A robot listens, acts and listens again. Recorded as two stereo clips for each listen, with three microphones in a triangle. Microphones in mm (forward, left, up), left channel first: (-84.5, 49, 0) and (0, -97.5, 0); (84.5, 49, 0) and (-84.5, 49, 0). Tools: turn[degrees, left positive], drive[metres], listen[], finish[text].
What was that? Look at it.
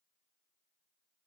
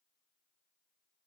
Action: listen[]
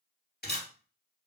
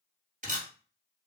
Thought: The camera shutter: 140° left.
Action: turn[140]
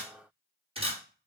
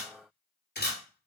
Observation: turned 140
Action: finish[Found it: a camera shutter, straight ahead, 1 to 2 m away.]